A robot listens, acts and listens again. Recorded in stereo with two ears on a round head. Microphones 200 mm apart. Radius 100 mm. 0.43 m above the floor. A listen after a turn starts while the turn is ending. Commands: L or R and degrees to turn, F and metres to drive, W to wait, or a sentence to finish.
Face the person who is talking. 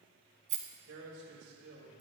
R60
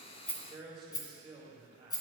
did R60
R30
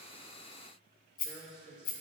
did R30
Facing the man speaking, 1 to 2 m away.